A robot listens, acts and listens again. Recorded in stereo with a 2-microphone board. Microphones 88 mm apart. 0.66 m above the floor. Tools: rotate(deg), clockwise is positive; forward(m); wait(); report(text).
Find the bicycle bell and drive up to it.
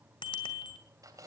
rotate(-65)
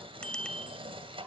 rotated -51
rotate(-10)
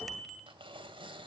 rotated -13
forward(1.0)
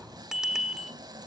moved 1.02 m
forward(1.0)
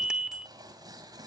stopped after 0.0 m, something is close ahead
rotate(10)
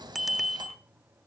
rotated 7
report("Arrived at the bicycle bell, straight ahead.")